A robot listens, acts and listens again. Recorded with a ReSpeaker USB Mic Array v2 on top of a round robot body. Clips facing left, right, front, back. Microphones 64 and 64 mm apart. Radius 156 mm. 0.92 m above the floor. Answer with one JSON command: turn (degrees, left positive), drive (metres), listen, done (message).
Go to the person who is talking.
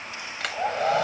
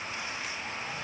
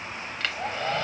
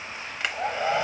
{"listen": true}
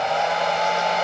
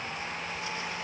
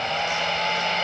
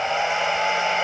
{"listen": true}
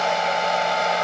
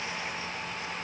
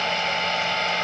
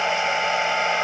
{"done": "I can't make out anyone speaking to turn to."}